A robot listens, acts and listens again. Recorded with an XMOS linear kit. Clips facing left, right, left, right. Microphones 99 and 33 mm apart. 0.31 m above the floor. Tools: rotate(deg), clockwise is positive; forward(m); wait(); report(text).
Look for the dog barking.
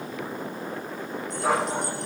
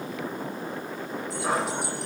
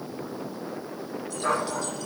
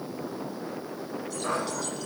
rotate(-65)
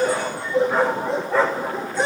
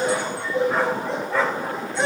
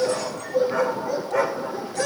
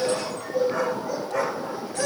report("Found it: a dog barking, straight ahead.")